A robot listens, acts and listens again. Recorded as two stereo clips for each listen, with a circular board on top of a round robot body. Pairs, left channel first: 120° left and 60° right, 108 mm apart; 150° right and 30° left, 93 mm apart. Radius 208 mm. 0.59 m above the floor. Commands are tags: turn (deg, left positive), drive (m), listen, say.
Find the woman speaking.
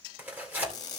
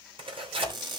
<listen/>
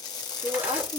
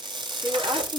<turn deg="-25"/>
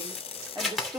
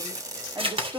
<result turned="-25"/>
<turn deg="-15"/>
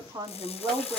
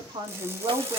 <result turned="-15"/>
<turn deg="-10"/>
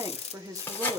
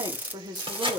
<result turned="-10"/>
<say>Facing the woman speaking, 2 to 4 m away.</say>